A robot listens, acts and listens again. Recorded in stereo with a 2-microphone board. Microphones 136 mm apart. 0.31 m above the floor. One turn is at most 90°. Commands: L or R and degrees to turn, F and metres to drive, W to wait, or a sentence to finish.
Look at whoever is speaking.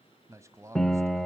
R20
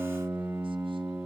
W
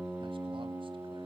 W
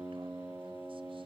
I heard a man speaking, but can't make it out now. It was about straight ahead or 140° right.